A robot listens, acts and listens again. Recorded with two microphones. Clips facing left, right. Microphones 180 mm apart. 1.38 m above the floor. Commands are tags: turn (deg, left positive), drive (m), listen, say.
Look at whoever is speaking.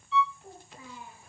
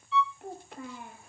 <turn deg="-55"/>
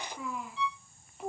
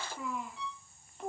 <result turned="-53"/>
<say>Found it: a child speaking, straight ahead, 2 to 4 m away.</say>